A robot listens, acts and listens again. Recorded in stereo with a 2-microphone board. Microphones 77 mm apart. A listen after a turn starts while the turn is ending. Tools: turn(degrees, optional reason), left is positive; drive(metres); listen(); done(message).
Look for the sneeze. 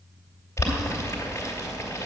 listen()
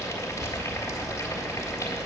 listen()
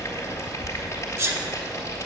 turn(degrees=-35, reason="The sneeze: about 35° right or 145° right.")
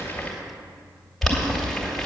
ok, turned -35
listen()
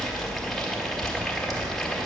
done("I heard a sneeze, but can't make it out now. It was about straight ahead or 110° right.")